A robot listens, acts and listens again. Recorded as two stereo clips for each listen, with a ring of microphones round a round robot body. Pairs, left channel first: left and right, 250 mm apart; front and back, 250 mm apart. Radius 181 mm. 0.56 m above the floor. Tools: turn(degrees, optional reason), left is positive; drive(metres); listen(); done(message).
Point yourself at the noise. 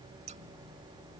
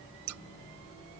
turn(degrees=-160, reason="The scissors: 160° right.")
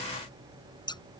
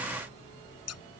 turn(degrees=15, reason="The scissors is now 15° left.")
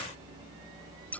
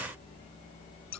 done("Found it: scissors, straight ahead.")